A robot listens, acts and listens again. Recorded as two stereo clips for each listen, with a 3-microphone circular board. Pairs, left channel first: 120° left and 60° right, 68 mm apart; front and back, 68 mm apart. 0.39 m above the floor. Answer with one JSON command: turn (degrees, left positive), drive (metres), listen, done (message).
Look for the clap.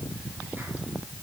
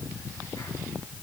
{"listen": true}
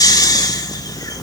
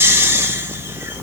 {"listen": true}
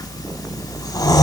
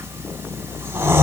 {"done": "I can't make out a clap, only snoring."}